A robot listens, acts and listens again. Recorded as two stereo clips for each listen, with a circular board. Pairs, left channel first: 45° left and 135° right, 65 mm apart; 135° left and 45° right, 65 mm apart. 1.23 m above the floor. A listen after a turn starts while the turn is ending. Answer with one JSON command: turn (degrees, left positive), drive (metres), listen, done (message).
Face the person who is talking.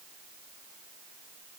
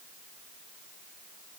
{"listen": true}
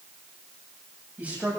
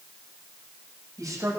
{"turn": -70}
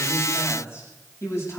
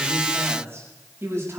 {"done": "Found it: a man speaking, straight ahead, over 4 m away."}